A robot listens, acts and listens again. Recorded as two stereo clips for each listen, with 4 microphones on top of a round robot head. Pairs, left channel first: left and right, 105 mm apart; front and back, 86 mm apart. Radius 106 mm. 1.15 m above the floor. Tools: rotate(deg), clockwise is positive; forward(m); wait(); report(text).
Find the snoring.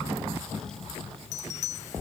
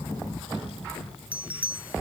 wait()
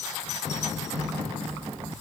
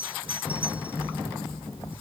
wait()
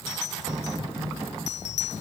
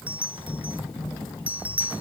report("I can't make out snoring to turn to.")